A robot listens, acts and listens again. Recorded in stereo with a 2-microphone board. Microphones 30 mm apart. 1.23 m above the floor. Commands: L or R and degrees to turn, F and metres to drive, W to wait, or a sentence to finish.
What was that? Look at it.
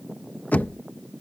L70
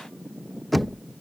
Found it: knocking, straight ahead.